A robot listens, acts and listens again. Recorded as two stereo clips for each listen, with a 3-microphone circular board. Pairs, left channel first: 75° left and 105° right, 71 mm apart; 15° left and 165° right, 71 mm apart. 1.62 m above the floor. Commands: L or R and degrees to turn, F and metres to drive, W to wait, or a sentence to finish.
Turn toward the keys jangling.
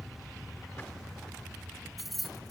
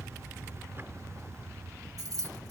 L165
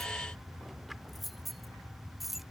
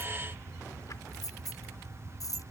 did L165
W
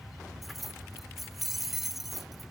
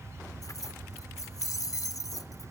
R15
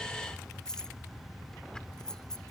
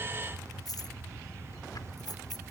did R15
W
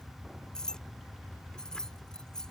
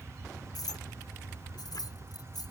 Facing the keys jangling.